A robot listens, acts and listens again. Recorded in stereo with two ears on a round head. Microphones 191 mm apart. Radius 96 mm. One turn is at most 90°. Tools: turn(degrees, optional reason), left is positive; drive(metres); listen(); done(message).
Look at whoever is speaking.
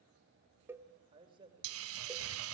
turn(degrees=-25, reason="The man speaking: about 25° right or 155° right.")
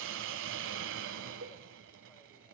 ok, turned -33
listen()
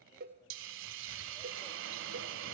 listen()
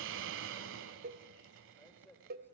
turn(degrees=10, reason="So it is at 10° left.")
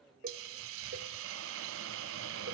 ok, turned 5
listen()
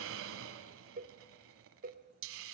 listen()
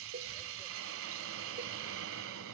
done("I heard a man speaking from this way, but can't make it out now.")